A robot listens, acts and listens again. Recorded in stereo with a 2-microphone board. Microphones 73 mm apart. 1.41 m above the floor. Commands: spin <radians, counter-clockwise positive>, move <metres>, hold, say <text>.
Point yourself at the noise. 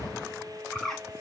spin 0.52
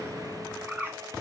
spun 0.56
spin -0.52
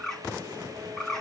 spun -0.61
say Facing the bird, 2 to 4 m away.